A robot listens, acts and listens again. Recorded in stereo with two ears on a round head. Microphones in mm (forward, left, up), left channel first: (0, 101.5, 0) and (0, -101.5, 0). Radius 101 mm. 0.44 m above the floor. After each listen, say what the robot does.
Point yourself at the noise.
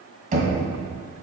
Turn 35° right.
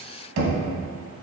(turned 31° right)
Turn 110° right.
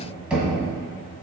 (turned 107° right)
Found it: knocking, straight ahead.